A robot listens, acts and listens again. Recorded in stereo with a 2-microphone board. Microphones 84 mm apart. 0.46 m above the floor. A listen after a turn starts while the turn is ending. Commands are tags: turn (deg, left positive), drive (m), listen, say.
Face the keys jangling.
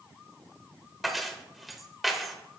<turn deg="30"/>
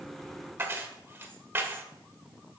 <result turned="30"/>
<turn deg="-30"/>
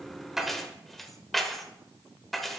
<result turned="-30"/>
<say>Facing the keys jangling.</say>